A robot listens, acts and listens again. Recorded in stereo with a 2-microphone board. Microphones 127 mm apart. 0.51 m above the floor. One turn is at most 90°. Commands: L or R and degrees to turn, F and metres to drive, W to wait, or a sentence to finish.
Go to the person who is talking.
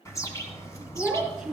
R30
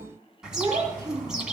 R90
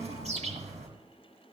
R55
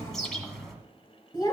L35
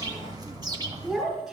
F1.0
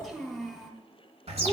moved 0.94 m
F1.0
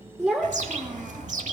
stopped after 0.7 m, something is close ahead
I am next to the child speaking.